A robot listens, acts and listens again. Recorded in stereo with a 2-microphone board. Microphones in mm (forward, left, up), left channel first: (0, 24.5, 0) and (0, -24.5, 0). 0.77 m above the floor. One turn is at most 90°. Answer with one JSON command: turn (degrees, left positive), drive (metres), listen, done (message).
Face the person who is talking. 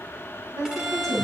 {"turn": -90}
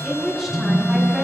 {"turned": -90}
{"done": "Found it: a woman speaking, straight ahead."}